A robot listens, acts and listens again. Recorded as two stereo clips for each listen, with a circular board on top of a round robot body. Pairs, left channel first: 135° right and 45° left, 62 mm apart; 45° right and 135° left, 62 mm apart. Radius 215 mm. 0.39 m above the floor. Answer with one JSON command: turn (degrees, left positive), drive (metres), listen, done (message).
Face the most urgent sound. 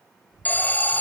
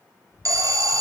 {"turn": 160}
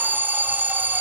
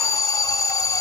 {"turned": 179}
{"turn": -15}
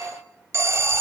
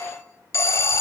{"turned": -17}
{"done": "Found it: an alarm, straight ahead."}